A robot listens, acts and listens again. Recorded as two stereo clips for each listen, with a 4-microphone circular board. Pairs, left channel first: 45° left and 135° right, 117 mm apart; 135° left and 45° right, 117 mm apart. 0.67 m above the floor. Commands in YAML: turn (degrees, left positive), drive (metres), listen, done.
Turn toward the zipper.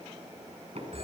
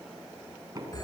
listen: true
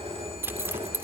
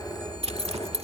turn: -65
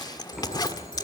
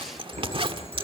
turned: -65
turn: -10
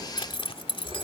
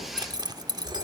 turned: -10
done: "Facing the zipper, 1 to 2 m away."